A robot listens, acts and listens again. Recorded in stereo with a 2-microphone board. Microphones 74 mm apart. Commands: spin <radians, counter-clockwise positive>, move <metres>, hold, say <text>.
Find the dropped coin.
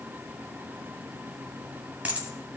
spin -0.35
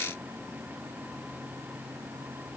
hold
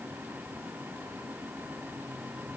say I heard a dropped coin, but can't make it out now. It was about straight ahead or 140° right.